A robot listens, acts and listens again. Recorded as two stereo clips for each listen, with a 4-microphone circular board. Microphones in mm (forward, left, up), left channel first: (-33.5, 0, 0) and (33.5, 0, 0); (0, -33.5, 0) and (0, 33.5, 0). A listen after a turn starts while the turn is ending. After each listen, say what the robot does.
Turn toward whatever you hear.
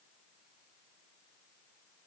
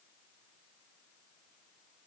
Keep listening.
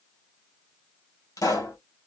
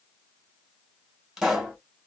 Turn 175° left.
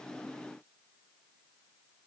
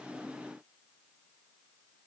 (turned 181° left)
Facing where the pop came from. I can't hear it now.